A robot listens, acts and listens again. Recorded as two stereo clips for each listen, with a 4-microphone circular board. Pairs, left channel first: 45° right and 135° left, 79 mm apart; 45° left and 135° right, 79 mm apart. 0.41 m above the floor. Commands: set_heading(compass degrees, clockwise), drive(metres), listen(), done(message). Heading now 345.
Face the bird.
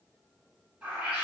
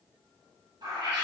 set_heading(135)
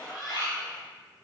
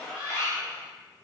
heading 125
set_heading(135)
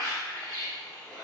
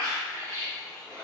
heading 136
done("Found it: a bird, straight ahead.")